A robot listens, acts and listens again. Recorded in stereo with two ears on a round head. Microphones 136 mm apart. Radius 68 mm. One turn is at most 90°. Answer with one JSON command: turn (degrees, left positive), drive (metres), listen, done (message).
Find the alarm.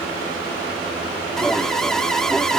{"turn": 30}
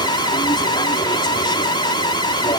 {"turn": 90}
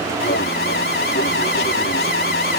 {"turn": 75}
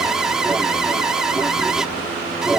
{"done": "Found it: an alarm, straight ahead."}